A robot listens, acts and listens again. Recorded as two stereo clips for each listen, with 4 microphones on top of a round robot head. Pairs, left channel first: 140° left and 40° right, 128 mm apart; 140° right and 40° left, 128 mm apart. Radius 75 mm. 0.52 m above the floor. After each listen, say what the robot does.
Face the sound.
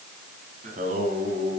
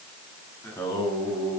Turn 75° right.
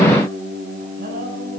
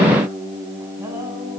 Turn 40° right.
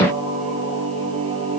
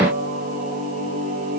Found it: singing, straight ahead.